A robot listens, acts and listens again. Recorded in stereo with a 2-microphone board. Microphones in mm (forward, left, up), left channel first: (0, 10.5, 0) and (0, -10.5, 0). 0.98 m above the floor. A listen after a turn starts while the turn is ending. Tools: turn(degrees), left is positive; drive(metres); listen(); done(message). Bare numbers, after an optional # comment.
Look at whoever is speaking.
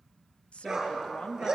# The woman speaking: about 70° left or 110° left.
turn(70)
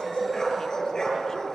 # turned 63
listen()
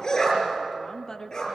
# So it is at 30° left.
turn(30)
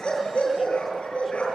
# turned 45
# Nothing new. It was at 15° right.
turn(-15)
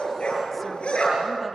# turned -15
listen()
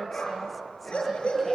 done("I heard a woman speaking from this way, but can't make it out now.")